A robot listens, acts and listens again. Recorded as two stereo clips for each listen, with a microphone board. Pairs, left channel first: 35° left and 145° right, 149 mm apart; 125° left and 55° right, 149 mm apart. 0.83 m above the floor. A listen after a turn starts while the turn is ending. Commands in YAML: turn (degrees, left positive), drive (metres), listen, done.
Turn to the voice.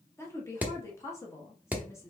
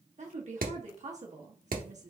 turn: -35
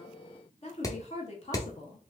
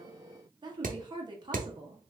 done: "Facing the woman speaking, 1 to 2 m away."